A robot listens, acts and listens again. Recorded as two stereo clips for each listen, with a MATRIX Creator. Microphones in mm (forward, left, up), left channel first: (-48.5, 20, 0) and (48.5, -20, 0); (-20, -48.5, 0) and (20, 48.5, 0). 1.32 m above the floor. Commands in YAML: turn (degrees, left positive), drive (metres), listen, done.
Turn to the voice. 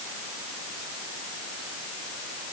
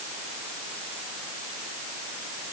listen: true
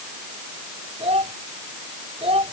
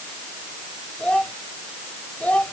turn: -35
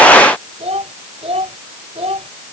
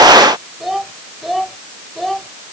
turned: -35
turn: -25
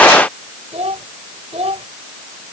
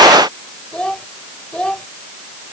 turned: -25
turn: -30
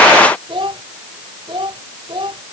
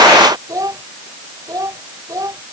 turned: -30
turn: 10
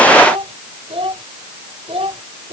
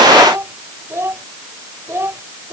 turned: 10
done: "Facing the child speaking."